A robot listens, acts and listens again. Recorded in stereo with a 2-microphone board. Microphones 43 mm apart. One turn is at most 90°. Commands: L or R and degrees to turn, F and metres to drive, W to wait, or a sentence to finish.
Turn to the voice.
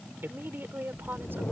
R60
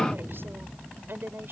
R55
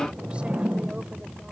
W
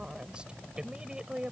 R20
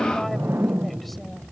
W
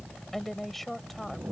Facing the woman speaking.